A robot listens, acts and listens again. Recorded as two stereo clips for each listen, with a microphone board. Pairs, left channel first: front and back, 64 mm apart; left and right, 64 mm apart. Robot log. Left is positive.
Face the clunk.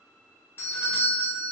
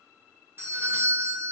cmd idle
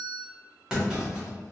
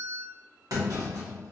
note: The clunk: 100° right.
cmd yaw -100
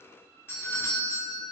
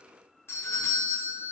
end: Facing where the clunk came from. I can't hear it now.